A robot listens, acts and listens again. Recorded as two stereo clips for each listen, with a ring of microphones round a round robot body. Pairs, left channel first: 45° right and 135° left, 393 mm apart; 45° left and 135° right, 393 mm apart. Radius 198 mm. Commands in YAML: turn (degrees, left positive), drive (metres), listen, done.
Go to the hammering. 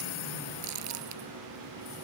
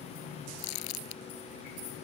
listen: true
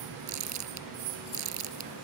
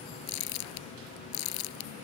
listen: true
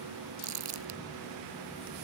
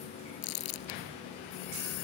done: "I can't make out hammering to turn to."